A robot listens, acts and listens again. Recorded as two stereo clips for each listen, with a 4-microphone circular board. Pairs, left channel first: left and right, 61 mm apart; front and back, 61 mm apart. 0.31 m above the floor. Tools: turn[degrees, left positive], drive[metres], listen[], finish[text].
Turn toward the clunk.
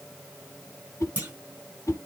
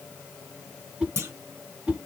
Thought: The clunk: 145° right.
Action: turn[-145]
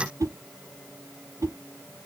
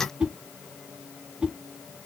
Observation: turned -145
Action: finish[I heard a clunk from this way, but can't make it out now.]